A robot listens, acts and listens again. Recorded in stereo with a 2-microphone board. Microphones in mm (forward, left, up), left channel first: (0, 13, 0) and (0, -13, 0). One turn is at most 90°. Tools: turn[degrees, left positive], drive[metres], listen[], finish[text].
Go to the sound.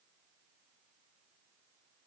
Action: listen[]
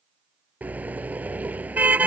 Action: turn[-90]
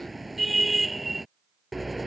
Action: drive[1.0]
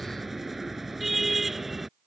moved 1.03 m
Action: drive[1.0]
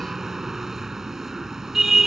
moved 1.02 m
Thought: The car horn is now 15° right.
Action: turn[-15]
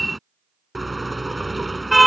Action: drive[1.0]
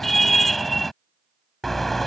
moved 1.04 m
Action: drive[1.0]
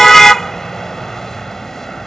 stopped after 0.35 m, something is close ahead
Thought: The car horn is now 15° left.
Action: turn[15]
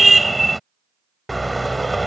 Action: finish[I am next to the car horn.]